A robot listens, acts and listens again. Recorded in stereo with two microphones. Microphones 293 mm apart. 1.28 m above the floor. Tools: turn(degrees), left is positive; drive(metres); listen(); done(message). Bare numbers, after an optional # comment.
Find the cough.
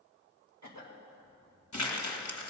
# The cough: about 70° right or 110° right.
turn(-70)
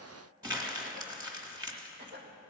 # So it is at 35° right.
turn(-35)
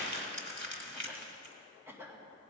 # The cough is now 10° right.
turn(-10)
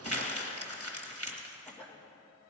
done("Facing the cough.")